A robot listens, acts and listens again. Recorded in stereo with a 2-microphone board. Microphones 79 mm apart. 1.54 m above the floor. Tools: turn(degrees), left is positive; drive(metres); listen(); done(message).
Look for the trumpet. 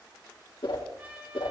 turn(degrees=-20)
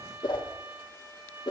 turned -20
turn(degrees=-140)
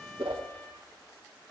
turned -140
listen()
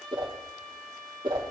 turn(degrees=10)
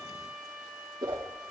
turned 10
done("Facing the trumpet, over 4 m away.")